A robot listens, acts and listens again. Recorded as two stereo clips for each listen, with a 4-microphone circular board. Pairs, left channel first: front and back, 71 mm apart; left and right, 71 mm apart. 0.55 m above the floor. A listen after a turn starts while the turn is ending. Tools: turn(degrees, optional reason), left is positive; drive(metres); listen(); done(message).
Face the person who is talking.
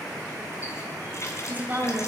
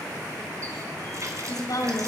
turn(degrees=115, reason="The woman speaking: 115° left.")
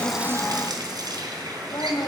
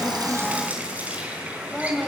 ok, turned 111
done("Found it: a woman speaking, straight ahead.")